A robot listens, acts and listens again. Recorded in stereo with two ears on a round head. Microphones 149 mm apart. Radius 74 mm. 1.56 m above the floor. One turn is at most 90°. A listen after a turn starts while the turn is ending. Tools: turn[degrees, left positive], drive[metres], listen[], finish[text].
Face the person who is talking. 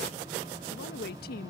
Thought: The woman speaking: about 60° left or 120° left.
Action: turn[60]
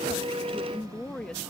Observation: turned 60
Action: finish[Facing the woman speaking.]